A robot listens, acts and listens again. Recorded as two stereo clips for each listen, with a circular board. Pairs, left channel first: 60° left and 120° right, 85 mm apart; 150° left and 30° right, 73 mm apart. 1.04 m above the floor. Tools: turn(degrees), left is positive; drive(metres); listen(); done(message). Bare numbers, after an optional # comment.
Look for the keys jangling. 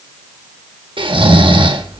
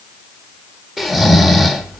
listen()
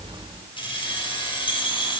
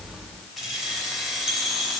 # The keys jangling: 55° left.
turn(55)
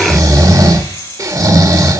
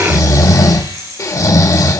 done("Facing the keys jangling, over 4 m away.")